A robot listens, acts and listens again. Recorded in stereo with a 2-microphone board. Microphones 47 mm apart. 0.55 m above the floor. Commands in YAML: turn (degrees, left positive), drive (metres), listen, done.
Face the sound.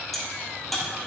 turn: 30
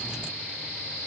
listen: true
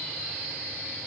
done: "I heard a crack, but can't make it out now. It was about 25° right or 145° left."